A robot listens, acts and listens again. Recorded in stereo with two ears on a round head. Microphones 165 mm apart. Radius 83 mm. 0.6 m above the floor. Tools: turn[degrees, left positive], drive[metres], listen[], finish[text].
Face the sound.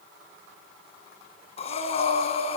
Thought: The breathing: about 35° left or 145° left.
Action: turn[35]
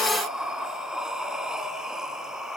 Action: finish[Found it: breathing, straight ahead.]